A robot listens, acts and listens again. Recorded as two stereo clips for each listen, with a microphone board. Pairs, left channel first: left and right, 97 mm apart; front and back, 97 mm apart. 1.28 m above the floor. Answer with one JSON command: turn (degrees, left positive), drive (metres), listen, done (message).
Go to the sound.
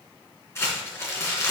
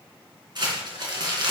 {"turn": 150}
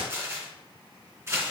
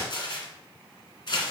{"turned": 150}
{"turn": -30}
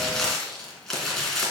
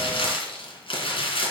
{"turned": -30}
{"drive": 1.0}
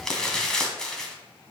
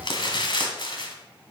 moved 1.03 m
{"turn": 10}
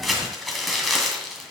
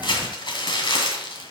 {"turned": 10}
{"drive": 1.0}
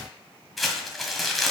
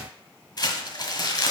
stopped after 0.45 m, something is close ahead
{"done": "I am next to the crumpling."}